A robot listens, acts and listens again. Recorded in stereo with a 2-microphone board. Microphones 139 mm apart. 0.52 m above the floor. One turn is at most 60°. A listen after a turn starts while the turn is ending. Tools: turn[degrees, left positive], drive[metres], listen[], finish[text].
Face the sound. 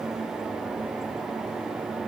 Action: listen[]
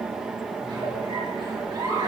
Thought: The giggle: about 35° right or 145° right.
Action: turn[-35]
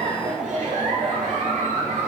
Thought: So it is at 110° right.
Action: turn[-60]
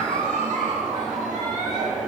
Thought: The giggle is now 75° right.
Action: turn[-60]
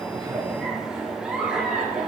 Action: finish[Facing the giggle, over 4 m away.]